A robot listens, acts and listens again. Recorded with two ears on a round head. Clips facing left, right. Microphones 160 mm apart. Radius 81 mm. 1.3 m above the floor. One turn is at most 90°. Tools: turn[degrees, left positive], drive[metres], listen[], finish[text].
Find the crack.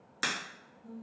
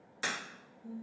Thought: The crack: about 60° left or 120° left.
Action: turn[60]
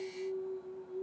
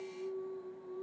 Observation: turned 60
Action: listen[]
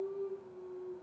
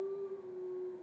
Action: finish[I heard a crack, but can't make it out now. It was about straight ahead or 60° left.]